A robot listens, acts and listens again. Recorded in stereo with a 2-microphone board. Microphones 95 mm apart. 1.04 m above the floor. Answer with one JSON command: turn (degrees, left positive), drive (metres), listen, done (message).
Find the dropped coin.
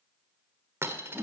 {"turn": -25}
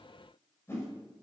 {"listen": true}
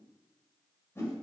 {"done": "I heard a dropped coin, but can't make it out now. It was about straight ahead or 130° right."}